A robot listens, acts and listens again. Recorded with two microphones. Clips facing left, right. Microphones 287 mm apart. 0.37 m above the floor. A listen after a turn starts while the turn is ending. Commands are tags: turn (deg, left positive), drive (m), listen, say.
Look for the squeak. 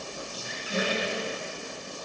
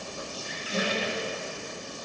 <turn deg="45"/>
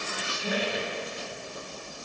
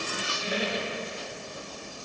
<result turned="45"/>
<turn deg="80"/>
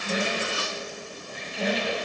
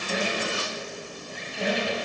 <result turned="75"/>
<say>Facing the squeak, under 1 m away.</say>